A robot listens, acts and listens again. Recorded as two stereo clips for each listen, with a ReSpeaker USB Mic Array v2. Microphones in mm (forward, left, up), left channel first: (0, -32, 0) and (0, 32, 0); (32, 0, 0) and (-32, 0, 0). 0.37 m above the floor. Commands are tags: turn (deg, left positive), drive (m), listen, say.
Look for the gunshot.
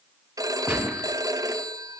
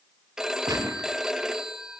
<turn deg="165"/>
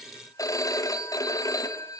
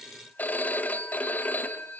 <say>Facing where the gunshot came from. I can't hear it now.</say>